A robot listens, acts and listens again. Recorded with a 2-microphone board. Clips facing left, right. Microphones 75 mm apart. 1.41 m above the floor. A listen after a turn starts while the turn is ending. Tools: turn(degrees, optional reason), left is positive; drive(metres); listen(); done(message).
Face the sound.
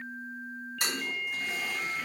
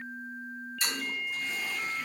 turn(degrees=60, reason="The toilet flushing: about 60° left or 120° left.")
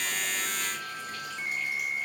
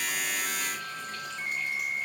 listen()
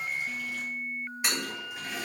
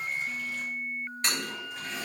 turn(degrees=10, reason="So it is at 10° left.")
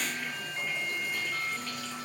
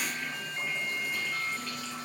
listen()
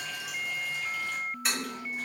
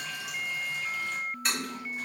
done("Found it: a toilet flushing, straight ahead.")